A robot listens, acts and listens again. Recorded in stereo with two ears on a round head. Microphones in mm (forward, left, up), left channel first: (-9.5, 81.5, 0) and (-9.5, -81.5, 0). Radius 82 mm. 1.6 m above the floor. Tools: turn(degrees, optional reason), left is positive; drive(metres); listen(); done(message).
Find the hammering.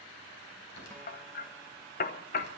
turn(degrees=45, reason="The hammering: about 45° left or 135° left.")
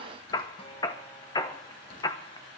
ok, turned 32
turn(degrees=25, reason="So it is at 25° left.")
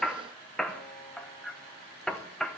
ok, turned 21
done("Found it: hammering, straight ahead.")